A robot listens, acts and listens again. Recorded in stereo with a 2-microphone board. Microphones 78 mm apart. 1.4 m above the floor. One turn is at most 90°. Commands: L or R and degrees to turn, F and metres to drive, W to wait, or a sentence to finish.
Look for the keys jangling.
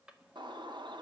W
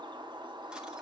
W
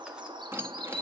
R30
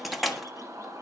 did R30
Facing the keys jangling, 1 to 2 m away.